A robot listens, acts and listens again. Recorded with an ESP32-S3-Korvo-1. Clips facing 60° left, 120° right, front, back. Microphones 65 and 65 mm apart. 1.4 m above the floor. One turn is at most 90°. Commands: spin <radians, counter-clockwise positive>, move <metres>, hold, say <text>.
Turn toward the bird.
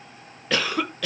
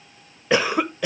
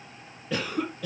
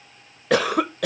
hold
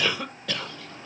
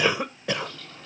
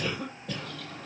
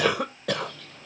say Found it: a bird, straight ahead.